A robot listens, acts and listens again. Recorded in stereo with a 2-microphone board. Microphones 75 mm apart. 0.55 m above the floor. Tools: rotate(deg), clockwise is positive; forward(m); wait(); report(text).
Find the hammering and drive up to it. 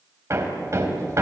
rotate(40)
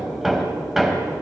forward(1.0)
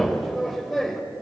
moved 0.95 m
forward(1.0)
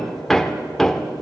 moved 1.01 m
forward(1.0)
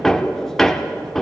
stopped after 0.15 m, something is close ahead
report("Arrived at the hammering, straight ahead.")